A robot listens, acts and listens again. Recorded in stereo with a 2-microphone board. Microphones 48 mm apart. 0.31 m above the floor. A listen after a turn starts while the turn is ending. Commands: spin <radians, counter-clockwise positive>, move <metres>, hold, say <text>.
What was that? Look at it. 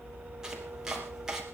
spin -0.52
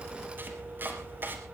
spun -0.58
spin -2.36
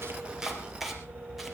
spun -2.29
say Facing the chopping, 2 to 4 m away.